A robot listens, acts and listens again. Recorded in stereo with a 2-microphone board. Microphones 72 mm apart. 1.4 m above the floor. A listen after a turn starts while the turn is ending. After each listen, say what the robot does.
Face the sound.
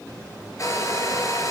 Turn 40° left.
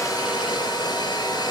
Turn 100° left.
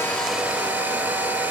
Turn 20° right.
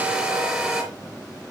Facing the hair dryer, over 4 m away.